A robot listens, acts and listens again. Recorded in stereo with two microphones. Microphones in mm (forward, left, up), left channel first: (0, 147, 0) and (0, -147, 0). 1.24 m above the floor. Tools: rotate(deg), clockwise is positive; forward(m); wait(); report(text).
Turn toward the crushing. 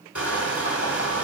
rotate(-75)
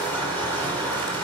report("Facing the crushing, 2 to 4 m away.")